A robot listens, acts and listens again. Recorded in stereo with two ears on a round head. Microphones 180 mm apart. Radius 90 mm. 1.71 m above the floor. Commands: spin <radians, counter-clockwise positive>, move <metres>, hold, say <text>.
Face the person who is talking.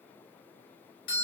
hold
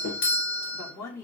spin 0.52
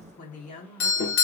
spin 2.44
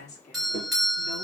spin 0.61
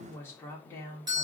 spin 0.26
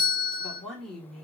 say Facing the woman speaking, 1 to 2 m away.